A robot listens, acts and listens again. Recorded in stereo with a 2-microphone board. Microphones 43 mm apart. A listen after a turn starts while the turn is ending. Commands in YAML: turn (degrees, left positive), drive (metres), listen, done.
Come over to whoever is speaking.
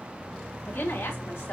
turn: 90
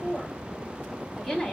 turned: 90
turn: 10
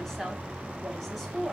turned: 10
drive: 1.0
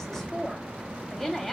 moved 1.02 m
drive: 1.0
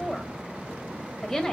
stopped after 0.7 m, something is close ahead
turn: 10
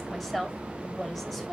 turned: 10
done: "Arrived at the woman speaking, straight ahead."